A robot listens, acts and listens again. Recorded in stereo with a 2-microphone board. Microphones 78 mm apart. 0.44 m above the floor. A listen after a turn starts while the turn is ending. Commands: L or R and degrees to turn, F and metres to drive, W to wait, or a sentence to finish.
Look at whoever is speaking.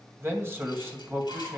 R30
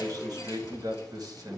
R115
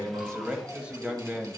R15
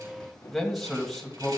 Facing the man speaking.